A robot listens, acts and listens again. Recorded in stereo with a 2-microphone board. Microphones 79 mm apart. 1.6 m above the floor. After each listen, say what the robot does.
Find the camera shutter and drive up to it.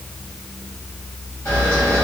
Turn 20° left.
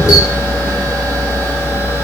Turn 135° left.
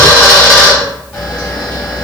Turn 20° left.
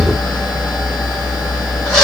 Drive 1.0 m forward.
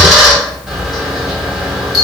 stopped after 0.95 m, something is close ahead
Arrived at the camera shutter, straight ahead.